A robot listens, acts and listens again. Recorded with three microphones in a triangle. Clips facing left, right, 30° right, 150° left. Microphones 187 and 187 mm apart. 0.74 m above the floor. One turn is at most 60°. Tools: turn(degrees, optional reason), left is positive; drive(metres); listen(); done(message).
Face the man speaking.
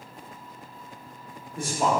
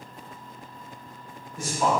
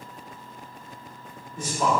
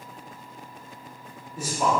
turn(degrees=60, reason="The man speaking: 65° left.")
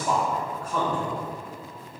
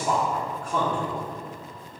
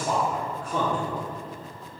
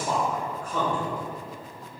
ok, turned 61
turn(degrees=-25, reason="The man speaking is now 25° right.")
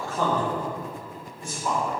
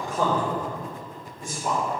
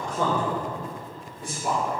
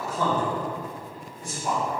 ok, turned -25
turn(degrees=-25, reason="The man speaking is now 25° right.")
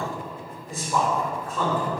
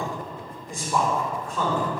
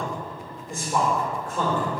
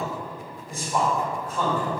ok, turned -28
done("Facing the man speaking.")